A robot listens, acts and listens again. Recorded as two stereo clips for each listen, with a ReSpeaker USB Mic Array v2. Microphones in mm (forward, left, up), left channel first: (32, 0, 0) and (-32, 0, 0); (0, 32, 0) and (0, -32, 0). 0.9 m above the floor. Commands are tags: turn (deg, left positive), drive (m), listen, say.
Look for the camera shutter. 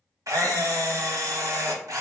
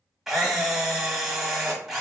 <turn deg="-175"/>
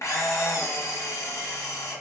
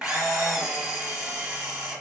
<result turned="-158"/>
<turn deg="-20"/>
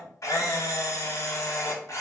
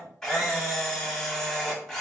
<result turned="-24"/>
<say>Found it: a camera shutter, straight ahead.</say>